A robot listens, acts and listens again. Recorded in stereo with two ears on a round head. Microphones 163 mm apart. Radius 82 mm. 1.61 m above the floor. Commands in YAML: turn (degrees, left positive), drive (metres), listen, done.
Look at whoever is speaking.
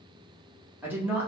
turn: -30
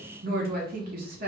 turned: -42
turn: -125
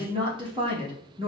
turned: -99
turn: -30
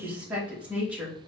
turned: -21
done: "Facing the woman speaking, 1 to 2 m away."